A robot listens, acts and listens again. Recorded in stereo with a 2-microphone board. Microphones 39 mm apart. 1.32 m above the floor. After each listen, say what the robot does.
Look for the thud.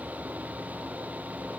Keep listening.
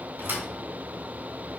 Turn 65° right.
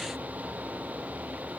Keep listening.
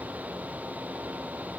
I heard a thud, but can't make it out now. It was about straight ahead or 50° right.